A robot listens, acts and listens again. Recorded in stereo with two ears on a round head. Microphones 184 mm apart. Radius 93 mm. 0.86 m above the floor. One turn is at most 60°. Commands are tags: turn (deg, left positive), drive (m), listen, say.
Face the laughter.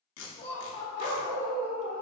<turn deg="20"/>
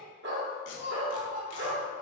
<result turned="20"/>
<turn deg="-45"/>
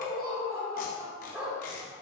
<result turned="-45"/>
<turn deg="-35"/>
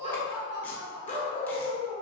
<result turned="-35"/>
<turn deg="-15"/>
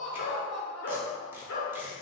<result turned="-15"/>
<say>Facing the laughter.</say>